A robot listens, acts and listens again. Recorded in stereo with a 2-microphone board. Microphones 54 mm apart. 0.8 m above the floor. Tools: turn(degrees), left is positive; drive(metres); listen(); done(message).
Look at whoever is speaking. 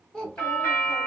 turn(degrees=30)
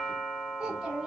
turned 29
turn(degrees=-15)
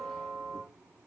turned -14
listen()
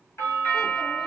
listen()
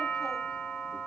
done("I heard a child speaking from this way, but can't make it out now.")